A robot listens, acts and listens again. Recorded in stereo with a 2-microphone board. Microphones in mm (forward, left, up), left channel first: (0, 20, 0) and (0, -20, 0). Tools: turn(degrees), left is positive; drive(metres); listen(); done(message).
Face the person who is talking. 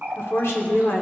turn(degrees=90)
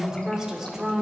turn(degrees=-10)
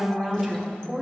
done("Found it: a woman speaking, straight ahead, 1 to 2 m away.")